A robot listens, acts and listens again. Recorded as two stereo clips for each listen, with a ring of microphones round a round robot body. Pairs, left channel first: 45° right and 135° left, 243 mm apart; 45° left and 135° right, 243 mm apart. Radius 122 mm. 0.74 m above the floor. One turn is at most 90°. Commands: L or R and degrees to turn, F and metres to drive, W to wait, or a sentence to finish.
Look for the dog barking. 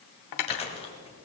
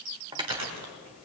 W
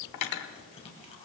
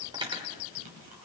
W
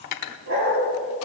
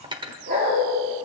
L90
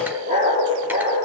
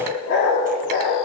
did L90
L75
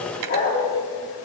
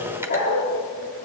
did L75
Facing the dog barking, over 4 m away.